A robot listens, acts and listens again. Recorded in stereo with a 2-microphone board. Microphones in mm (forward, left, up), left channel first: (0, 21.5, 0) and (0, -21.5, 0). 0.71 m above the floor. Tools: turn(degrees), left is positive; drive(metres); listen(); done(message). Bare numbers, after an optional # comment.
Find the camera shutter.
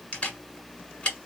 # The camera shutter: about 30° left or 150° left.
turn(30)
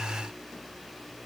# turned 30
listen()
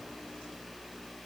listen()
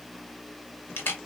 # So it is at 120° left.
turn(120)
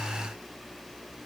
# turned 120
listen()
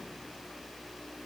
listen()
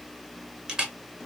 # The camera shutter is now 20° right.
turn(-20)
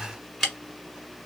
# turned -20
done("Facing the camera shutter, 1 to 2 m away.")